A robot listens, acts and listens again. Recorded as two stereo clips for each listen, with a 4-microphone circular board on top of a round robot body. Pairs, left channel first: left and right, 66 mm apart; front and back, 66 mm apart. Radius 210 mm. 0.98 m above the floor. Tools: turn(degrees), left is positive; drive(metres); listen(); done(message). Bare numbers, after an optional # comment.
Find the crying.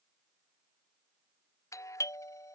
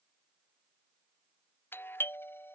listen()
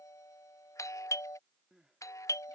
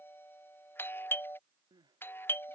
# The crying: 175° right.
turn(-175)
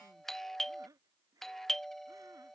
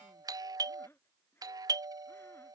listen()
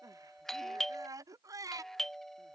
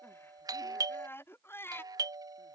# The crying is now 55° right.
turn(-55)
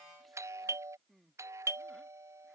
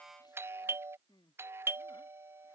done("Facing the crying.")